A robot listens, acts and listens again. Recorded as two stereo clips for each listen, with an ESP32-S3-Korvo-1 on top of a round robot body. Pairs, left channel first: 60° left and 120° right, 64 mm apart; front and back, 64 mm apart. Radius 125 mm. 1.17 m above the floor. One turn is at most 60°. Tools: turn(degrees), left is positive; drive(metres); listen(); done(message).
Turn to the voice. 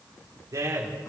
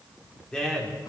turn(degrees=-60)
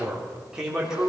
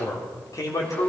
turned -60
turn(degrees=-40)
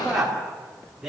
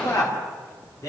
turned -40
turn(degrees=-35)
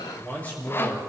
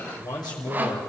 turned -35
turn(degrees=-10)
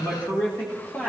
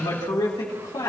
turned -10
turn(degrees=-10)
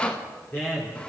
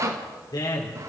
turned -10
done("Found it: a man speaking, straight ahead, 2 to 4 m away.")